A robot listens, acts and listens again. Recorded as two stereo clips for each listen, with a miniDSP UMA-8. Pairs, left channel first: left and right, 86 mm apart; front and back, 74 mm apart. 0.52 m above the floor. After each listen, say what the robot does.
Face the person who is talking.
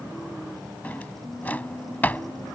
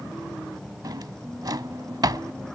Keep listening.
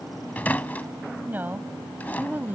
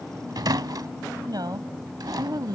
Turn 160° right.
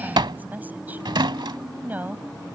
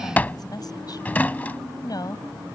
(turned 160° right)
Turn 20° right.
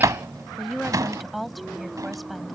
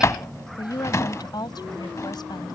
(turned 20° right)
Facing the woman speaking.